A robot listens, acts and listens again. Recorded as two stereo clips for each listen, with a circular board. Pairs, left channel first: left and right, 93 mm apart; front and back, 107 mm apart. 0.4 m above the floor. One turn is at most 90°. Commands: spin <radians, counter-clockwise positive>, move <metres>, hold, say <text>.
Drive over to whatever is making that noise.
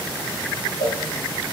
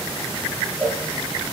spin 1.48
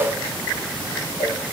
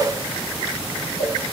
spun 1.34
move 1.0
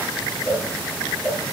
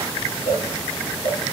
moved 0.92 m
move 1.0
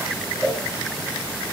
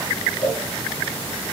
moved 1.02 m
spin 0.26
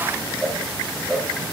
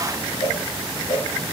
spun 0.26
move 1.0
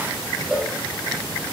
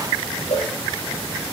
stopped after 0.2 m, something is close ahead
say I am next to the cowbell.